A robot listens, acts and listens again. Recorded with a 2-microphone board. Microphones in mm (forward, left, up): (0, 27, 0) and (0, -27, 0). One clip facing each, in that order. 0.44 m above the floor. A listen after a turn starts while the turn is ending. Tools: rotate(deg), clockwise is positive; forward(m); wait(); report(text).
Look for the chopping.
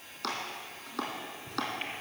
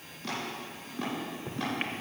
rotate(-90)
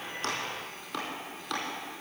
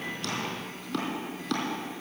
rotate(-10)
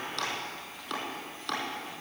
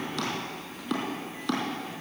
report("Facing the chopping.")